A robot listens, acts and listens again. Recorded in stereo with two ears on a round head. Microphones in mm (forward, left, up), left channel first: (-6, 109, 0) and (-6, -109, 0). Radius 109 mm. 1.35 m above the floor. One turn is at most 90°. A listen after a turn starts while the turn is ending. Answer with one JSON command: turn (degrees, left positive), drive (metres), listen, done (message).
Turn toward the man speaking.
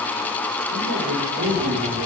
{"turn": -90}
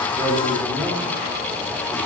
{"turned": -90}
{"listen": true}
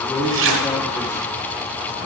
{"done": "Found it: a man speaking, straight ahead, 2 to 4 m away."}